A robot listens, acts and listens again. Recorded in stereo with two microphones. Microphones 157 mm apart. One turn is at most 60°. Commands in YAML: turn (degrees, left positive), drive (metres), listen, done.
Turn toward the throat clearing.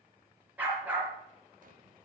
listen: true
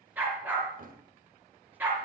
listen: true
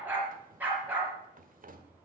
done: "I can't make out throat clearing, only a drawer and a dog barking."